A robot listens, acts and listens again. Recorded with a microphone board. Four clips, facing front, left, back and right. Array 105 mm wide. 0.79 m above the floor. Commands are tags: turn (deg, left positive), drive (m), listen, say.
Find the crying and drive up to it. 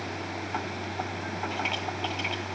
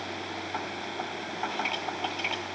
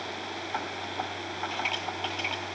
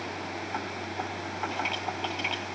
<listen/>
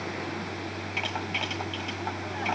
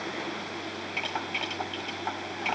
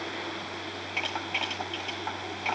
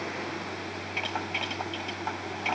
<listen/>
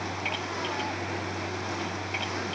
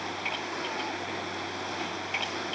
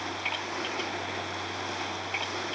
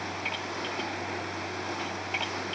<say>I can't make out crying to turn to.</say>